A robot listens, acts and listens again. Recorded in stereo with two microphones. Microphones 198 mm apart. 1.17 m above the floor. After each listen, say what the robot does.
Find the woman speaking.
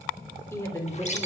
Turn 30° left.
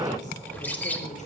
Keep listening.
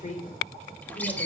Turn 140° left.
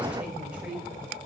Facing the woman speaking, over 4 m away.